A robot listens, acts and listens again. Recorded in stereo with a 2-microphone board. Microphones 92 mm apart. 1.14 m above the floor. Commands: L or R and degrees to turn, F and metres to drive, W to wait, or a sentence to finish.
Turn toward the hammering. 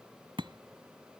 R70
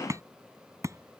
R35
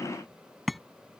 Found it: hammering, straight ahead.